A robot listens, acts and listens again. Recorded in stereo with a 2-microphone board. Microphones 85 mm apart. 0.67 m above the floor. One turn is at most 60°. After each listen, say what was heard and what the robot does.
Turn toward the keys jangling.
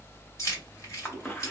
The keys jangling: about 40° left or 140° left. Turn 40° left.
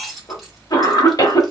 Facing the keys jangling, 1 to 2 m away.